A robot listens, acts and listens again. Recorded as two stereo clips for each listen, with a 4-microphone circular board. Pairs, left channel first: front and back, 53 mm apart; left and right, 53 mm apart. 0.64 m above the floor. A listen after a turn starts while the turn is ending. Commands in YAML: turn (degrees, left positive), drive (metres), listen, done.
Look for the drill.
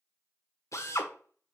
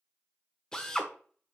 turn: 15
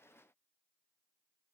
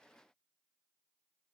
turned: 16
listen: true
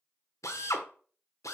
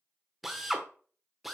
done: "Facing the drill, 1 to 2 m away."